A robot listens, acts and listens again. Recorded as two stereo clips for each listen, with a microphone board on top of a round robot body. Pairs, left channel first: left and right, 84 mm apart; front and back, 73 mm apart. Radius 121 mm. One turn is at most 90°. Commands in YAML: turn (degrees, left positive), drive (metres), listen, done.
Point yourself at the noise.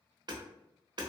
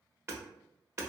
turn: -90
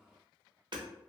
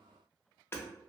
turn: -60
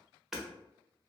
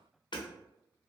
done: "Facing the hammering."